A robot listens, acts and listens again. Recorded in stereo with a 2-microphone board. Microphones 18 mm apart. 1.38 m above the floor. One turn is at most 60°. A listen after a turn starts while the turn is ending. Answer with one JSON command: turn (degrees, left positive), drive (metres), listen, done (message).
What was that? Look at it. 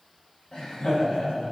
{"turn": 60}
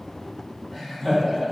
{"turn": 15}
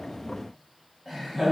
{"done": "Found it: laughter, straight ahead."}